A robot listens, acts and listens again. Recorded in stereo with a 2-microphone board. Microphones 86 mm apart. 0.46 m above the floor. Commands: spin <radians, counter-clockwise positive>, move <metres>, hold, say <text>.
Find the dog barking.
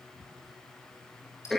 hold
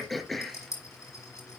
hold
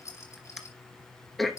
say I can't make out a dog barking, only throat clearing and a rattle.